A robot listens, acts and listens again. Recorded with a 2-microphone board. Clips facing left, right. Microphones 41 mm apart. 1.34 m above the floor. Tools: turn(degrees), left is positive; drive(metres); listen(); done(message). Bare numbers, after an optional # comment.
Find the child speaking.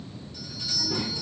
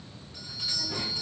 turn(30)
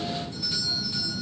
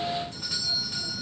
listen()
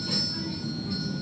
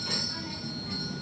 # So it is at 75° right.
turn(-75)
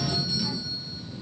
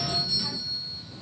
# The child speaking is now 55° right.
turn(-55)
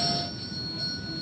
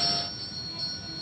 listen()
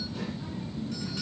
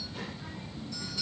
# The child speaking is now 15° right.
turn(-15)
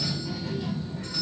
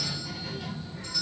done("Found it: a child speaking, straight ahead, 1 to 2 m away.")